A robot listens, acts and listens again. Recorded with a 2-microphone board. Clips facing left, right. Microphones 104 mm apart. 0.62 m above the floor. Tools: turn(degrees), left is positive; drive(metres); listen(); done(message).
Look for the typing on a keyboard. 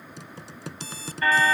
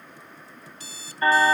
turn(degrees=90)
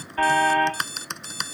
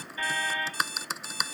done("Facing the typing on a keyboard.")